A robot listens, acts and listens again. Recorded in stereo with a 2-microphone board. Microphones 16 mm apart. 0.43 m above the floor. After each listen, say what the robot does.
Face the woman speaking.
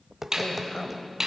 Turn 50° left.
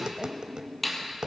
Keep listening.
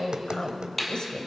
Turn 70° left.
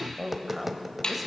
Turn 15° right.
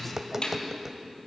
Keep listening.
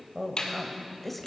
Found it: a woman speaking, straight ahead.